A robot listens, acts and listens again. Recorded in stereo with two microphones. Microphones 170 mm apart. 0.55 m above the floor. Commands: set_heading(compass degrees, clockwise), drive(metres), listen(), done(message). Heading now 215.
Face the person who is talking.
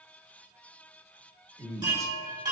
set_heading(235)
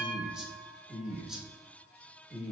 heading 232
done("Found it: a man speaking, straight ahead, 1 to 2 m away.")